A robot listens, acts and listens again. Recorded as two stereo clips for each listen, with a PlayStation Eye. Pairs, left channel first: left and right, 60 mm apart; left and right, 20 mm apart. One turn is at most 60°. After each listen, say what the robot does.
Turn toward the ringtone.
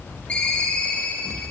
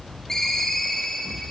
Turn 20° left.
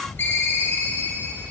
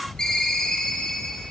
Turn 60° left.
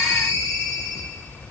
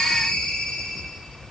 Turn 60° left.
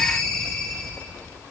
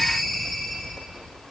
Turn 10° left.
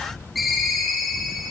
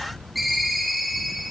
Found it: a ringtone, straight ahead.